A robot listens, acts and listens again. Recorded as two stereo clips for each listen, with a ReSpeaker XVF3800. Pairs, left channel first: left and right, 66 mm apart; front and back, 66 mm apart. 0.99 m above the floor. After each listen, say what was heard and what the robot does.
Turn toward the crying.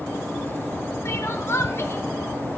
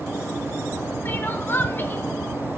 The crying: 50° left. Turn 50° left.
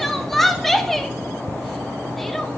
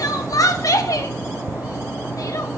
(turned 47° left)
Facing the crying, under 1 m away.